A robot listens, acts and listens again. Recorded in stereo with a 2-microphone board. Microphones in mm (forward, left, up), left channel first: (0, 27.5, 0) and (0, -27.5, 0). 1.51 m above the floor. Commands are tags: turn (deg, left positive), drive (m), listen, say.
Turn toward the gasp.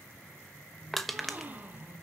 <turn deg="-35"/>
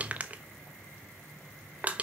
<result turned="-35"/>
<listen/>
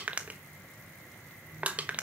<say>I heard a gasp, but can't make it out now. It was about straight ahead or 110° right.</say>